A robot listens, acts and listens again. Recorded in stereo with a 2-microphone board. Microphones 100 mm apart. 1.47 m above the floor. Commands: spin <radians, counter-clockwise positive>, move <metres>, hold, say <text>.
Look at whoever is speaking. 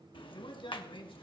spin 1.57
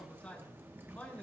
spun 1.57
spin 0.26
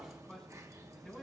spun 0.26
say Found it: a man speaking, straight ahead, over 4 m away.